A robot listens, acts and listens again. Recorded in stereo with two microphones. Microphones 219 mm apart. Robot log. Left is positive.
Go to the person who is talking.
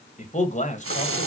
note: The man speaking: about 35° left or 145° left.
cmd yaw +35
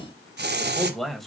cmd fwd 1.0
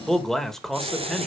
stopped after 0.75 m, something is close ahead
end: I am next to the man speaking.